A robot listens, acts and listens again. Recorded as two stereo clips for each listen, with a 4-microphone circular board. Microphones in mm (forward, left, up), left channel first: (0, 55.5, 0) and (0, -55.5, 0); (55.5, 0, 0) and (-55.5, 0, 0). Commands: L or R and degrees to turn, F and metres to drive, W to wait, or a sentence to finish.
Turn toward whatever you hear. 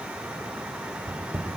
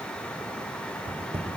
R155
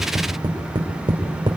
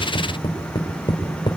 R45
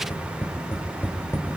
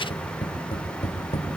L20
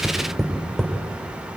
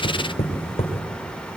Facing the tapping, 2 to 4 m away.